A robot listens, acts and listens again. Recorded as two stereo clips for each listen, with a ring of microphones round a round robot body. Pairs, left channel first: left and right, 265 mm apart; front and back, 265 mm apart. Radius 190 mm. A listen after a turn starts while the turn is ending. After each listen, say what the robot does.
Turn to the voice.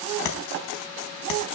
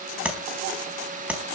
Keep listening.
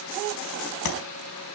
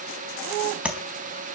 Keep listening.
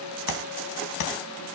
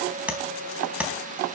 I can't make out anyone speaking, only tapping.